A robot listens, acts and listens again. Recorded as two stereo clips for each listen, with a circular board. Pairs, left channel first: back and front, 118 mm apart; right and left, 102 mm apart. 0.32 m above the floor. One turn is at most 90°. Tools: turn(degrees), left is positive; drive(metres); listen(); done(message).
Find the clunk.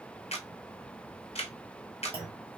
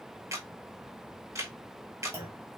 turn(degrees=30)
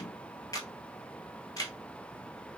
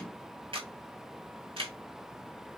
done("Facing where the clunk came from. I can't hear it now.")